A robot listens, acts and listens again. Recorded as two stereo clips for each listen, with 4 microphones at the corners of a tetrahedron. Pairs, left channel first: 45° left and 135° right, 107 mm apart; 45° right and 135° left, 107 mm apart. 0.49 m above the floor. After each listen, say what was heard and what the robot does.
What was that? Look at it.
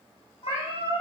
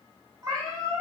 The cat meowing: 80° left. Turn 80° left.
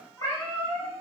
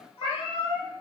The cat meowing is now 10° right. Turn 10° right.
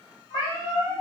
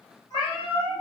Found it: a cat meowing, straight ahead.